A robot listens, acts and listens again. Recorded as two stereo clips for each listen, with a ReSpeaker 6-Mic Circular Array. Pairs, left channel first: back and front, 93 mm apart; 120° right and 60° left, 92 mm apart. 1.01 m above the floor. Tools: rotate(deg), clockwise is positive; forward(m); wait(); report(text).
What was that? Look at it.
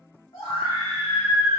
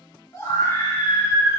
rotate(-180)
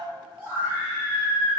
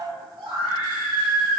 rotate(-65)
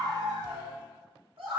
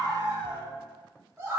report("Facing the scream.")